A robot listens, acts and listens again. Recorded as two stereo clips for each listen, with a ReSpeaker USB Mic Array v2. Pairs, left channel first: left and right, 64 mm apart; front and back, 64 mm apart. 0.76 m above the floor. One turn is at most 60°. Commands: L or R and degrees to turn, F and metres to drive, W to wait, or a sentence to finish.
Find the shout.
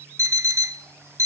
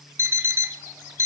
W
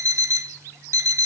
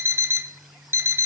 W
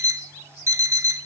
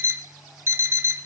I can't make out a shout, only an alarm clock.